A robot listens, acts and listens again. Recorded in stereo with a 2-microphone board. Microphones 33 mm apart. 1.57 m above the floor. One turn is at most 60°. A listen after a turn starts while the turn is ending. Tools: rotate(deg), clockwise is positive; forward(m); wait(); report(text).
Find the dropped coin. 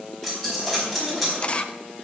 rotate(-30)
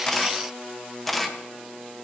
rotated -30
wait()
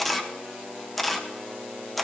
report("I heard a dropped coin, but can't make it out now. It was about 30° right or 150° left.")